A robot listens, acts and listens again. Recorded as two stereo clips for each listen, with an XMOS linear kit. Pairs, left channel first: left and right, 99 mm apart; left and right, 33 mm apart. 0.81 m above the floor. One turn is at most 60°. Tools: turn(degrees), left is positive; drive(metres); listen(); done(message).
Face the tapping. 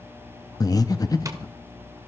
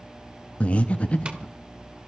turn(degrees=-35)
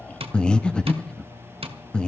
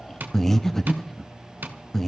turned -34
turn(degrees=-60)
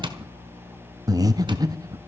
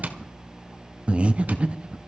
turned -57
turn(degrees=-55)
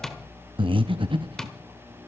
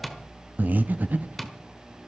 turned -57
done("Found it: tapping, straight ahead.")